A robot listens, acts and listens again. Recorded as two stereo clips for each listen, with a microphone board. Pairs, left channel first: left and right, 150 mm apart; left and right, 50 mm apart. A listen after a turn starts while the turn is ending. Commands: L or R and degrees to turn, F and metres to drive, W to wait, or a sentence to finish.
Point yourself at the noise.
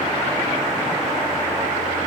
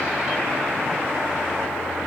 W
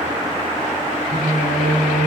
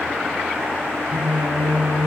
R60
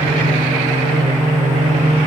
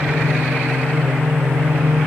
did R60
R55
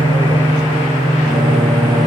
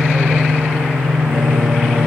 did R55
Found it: singing, straight ahead.